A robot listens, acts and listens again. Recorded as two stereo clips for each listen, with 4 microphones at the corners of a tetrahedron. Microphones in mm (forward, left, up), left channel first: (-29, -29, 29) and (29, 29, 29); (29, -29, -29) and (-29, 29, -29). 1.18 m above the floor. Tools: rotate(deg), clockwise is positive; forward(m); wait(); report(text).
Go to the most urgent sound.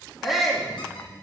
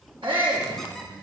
rotate(-135)
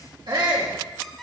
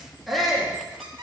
rotate(-45)
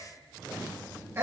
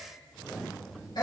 rotate(10)
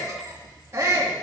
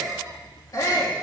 forward(1.0)
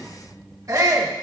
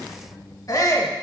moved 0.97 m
forward(1.0)
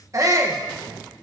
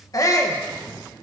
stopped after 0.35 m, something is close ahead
report("I am next to the shout.")